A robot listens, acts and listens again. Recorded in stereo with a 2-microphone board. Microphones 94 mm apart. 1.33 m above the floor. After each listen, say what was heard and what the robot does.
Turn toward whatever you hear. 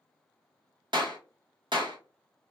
The clap: about 60° right or 120° right. Turn 60° right.
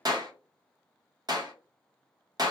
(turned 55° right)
So it is at 55° right. Turn 55° right.
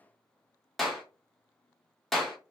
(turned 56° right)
Facing the clap, 1 to 2 m away.